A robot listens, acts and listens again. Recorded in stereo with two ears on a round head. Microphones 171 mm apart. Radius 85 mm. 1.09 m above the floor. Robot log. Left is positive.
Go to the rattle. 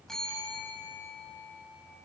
cmd idle
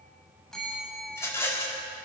cmd yaw +30
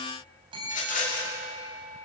note: So it is at 135° left.
cmd yaw +135
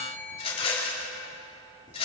note: The rattle is now 30° left.
cmd yaw +30
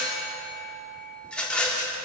cmd fwd 1.0
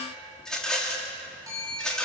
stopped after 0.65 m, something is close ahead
end: Blocked. The rattle is further on, straight ahead.